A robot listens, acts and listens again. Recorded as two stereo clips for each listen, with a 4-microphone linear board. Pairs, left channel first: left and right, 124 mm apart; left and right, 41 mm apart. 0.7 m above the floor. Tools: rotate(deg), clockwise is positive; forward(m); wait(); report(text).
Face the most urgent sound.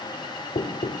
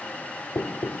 wait()
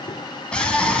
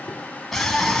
rotate(-30)
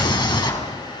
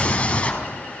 rotate(-145)
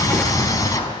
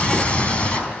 rotate(-30)
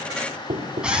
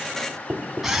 report("Found it: a scream, straight ahead.")